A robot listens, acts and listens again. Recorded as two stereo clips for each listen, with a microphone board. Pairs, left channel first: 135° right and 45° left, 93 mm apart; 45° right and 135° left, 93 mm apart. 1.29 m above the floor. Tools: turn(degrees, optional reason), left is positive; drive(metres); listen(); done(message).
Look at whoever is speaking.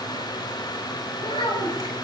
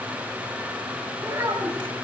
turn(degrees=-160, reason="The child speaking: 160° right.")
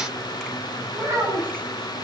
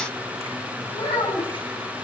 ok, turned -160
turn(degrees=-20, reason="The child speaking is now 20° right.")
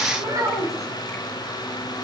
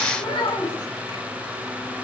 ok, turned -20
done("Facing the child speaking.")